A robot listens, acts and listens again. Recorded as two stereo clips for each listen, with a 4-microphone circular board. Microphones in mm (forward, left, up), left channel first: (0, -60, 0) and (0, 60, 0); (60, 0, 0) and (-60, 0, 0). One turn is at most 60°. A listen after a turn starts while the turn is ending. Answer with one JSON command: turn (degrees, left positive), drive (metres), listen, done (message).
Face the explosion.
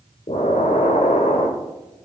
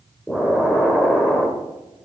{"turn": -60}
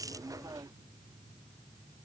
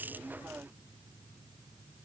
{"turn": -30}
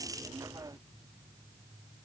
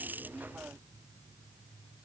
{"done": "Facing where the explosion came from. I can't hear it now."}